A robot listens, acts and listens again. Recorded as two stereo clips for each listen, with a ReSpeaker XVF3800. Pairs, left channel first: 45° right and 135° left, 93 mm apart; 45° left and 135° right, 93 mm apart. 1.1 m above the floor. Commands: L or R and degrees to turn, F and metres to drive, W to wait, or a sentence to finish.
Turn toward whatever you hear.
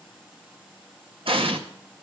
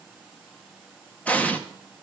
L120
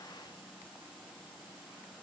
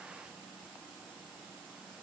Facing where the explosion came from. I can't hear it now.